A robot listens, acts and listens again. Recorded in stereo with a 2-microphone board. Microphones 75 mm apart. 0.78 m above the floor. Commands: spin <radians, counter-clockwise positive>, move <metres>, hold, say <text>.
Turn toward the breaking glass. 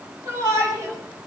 hold
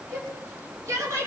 hold
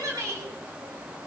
say I can't make out breaking glass, only a shout.